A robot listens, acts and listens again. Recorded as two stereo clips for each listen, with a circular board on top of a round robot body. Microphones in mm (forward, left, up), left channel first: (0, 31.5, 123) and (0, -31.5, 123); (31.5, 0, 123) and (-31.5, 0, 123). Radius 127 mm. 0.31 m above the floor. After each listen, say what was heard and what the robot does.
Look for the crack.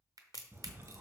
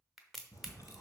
The crack: 95° right. Turn 95° right.
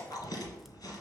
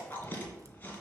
I heard a crack from this way, but can't make it out now.